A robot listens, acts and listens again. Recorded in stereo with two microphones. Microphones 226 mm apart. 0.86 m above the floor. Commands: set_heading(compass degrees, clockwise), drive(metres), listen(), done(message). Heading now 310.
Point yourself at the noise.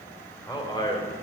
set_heading(290)
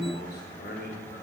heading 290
set_heading(160)
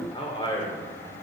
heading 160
set_heading(145)
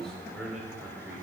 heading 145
done("Facing the man speaking, 2 to 4 m away.")